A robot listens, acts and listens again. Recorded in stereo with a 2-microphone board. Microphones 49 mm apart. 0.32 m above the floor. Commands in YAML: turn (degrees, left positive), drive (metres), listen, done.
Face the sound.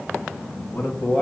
turn: 30
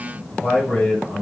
turn: 25
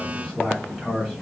turn: 30
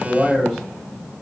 turn: 20
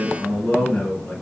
turn: 30
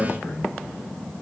turn: 130
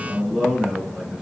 turn: -15
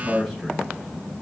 done: "Found it: a man speaking, straight ahead."